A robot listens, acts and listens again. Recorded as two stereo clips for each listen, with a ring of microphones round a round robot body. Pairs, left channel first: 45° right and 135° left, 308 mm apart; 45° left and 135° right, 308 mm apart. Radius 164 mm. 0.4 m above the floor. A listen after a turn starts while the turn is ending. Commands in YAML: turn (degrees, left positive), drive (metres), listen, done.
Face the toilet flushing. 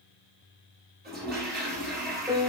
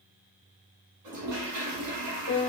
turn: -165
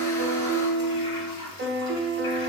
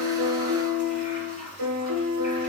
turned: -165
turn: -20
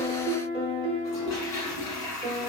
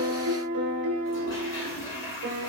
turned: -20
turn: -10
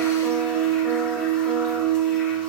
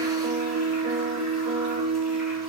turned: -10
listen: true
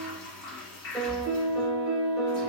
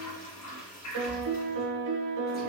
done: "Facing the toilet flushing."